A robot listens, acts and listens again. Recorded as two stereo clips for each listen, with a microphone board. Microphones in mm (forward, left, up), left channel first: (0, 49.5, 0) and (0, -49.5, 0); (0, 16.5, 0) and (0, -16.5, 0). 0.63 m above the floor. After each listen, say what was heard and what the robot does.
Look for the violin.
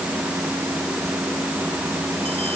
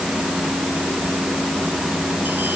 Keep listening.
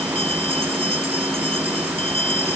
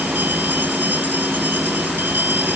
Keep listening.
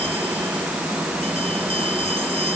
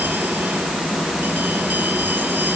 I can't make out a violin to turn to.